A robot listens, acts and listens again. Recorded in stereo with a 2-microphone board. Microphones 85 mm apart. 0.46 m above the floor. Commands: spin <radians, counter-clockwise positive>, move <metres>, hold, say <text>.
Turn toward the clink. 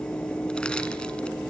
hold
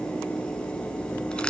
hold
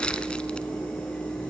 say I can't make out a clink to turn to.